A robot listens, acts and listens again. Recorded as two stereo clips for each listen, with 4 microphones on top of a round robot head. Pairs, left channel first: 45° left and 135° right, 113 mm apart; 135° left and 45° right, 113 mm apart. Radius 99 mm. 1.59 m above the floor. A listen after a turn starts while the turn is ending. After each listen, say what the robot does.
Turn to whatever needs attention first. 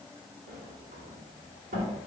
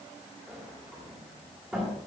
Keep listening.
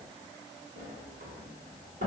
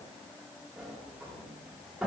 Keep listening.
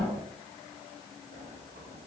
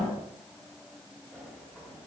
I can't make out anything urgent to turn to.